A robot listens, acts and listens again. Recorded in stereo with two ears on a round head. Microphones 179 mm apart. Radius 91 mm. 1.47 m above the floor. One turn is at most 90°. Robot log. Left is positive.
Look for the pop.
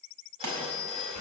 note: The pop: about 60° right or 120° right.
cmd yaw -60
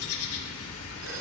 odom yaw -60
cmd idle
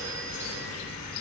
end: I heard a pop, but can't make it out now. It was about straight ahead or 60° right.